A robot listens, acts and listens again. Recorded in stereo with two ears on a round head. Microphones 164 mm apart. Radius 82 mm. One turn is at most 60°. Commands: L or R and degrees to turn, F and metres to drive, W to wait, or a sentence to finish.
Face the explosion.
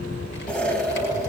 L30
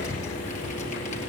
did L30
W
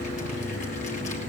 I heard an explosion, but can't make it out now. It was about 25° right or 145° left.